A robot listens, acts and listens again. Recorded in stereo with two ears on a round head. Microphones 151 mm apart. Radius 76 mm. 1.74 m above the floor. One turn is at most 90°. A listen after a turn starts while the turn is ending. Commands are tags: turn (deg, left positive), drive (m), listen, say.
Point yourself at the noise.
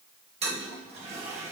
<turn deg="-35"/>
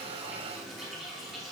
<say>Facing the toilet flushing, 1 to 2 m away.</say>